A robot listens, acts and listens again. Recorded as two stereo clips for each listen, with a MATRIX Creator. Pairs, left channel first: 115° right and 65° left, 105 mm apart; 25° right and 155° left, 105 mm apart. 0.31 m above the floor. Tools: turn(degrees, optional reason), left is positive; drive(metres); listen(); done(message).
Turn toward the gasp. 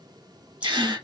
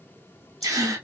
turn(degrees=105, reason="The gasp: 105° left.")
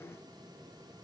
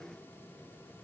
done("I heard a gasp from this way, but can't make it out now.")